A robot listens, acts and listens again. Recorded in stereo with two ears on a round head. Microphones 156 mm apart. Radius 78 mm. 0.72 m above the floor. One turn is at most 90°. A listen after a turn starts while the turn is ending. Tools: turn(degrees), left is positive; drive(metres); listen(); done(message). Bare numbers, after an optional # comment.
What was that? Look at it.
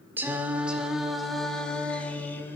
turn(30)
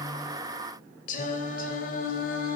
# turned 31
# So it is at 125° left.
turn(90)
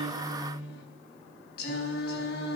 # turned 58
# The singing is now 60° left.
turn(60)
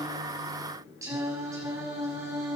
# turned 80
# The singing is now 20° right.
turn(-20)
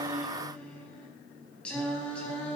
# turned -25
done("Found it: singing, straight ahead, over 4 m away.")